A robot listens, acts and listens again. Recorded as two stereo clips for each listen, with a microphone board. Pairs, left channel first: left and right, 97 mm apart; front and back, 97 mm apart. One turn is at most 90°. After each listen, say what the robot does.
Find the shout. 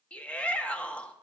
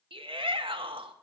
Turn 90° left.
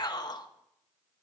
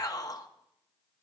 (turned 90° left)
Turn 50° left.
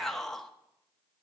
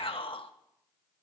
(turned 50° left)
Facing the shout, 1 to 2 m away.